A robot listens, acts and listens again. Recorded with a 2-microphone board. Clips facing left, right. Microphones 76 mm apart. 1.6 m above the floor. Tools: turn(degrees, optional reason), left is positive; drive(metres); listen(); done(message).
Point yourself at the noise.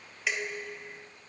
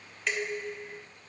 turn(degrees=30)
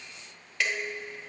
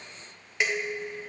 turn(degrees=-25, reason="So it is at 25° right.")
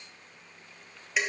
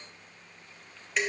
done("Facing the dishes clattering.")